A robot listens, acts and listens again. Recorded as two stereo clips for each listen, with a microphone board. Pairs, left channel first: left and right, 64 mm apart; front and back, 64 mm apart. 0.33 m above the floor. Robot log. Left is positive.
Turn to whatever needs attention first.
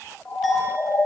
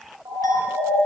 note: The siren: 160° left.
cmd yaw +160
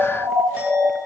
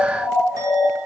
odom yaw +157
end: Facing the siren, over 4 m away.